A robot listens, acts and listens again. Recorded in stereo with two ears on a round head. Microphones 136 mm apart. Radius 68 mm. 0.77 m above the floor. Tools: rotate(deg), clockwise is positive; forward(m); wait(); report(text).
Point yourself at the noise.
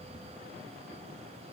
wait()
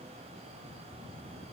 wait()
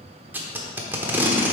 rotate(30)
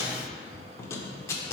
rotate(-20)
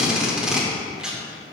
report("Facing the tape being pulled, under 1 m away.")